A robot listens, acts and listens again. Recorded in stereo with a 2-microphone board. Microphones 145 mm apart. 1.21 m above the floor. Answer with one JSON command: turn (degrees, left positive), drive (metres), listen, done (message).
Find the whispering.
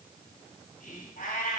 {"turn": 65}
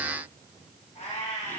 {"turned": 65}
{"listen": true}
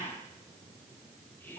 {"turn": 15}
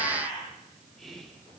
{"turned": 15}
{"done": "Found it: whispering, straight ahead."}